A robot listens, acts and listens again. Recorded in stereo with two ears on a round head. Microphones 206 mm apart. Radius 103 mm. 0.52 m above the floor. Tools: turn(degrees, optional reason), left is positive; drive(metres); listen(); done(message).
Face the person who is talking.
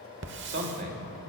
turn(degrees=-55, reason="The man speaking: about 55° right or 125° right.")
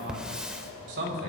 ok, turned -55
turn(degrees=-50, reason="So it is at 50° right.")
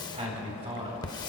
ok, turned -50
turn(degrees=-25, reason="The man speaking is now 25° right.")
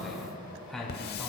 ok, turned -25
done("Found it: a man speaking, straight ahead.")